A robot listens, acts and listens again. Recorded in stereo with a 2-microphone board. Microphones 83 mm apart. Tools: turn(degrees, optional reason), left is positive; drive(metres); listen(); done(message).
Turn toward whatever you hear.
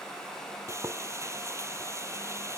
turn(degrees=-35, reason="The frying: about 35° right or 145° right.")
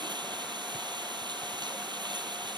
turn(degrees=-110, reason="So it is at 110° right.")
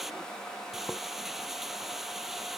done("Facing the frying.")